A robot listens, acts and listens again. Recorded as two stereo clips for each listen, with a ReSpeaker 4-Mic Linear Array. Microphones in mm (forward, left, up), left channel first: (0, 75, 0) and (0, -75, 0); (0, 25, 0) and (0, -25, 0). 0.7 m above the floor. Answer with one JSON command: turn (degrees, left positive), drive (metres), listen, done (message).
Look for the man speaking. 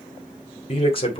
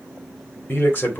{"turn": 35}
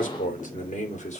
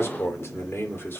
{"turn": 125}
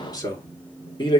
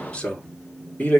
{"turn": 35}
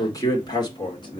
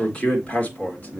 {"turn": 35}
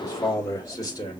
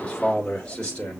{"turn": 25}
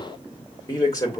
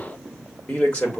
{"turn": 25}
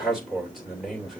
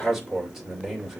{"done": "Facing the man speaking, 2 to 4 m away."}